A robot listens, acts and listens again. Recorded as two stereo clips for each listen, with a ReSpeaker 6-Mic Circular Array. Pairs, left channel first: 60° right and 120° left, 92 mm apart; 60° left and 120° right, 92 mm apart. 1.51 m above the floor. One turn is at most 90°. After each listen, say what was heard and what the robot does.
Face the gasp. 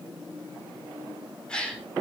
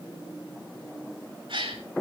The gasp: 140° right. Turn 90° right.
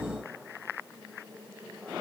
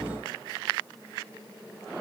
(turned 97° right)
Nothing new. It was at 45° right. Turn 45° right.
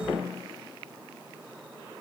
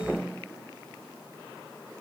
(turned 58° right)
Nothing new. It was at 15° left. Turn 15° left.
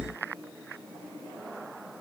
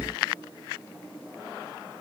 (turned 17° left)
Facing where the gasp came from. I can't hear it now.